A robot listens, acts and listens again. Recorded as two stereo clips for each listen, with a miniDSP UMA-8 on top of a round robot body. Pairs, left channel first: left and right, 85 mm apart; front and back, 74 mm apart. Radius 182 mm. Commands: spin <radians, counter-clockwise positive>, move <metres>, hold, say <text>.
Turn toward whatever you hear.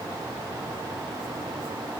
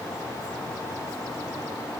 hold
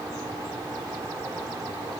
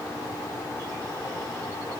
hold
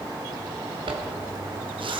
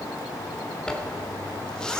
spin -1.40
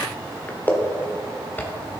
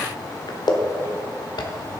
spin 0.35
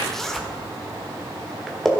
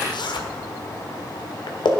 say Facing the zipper.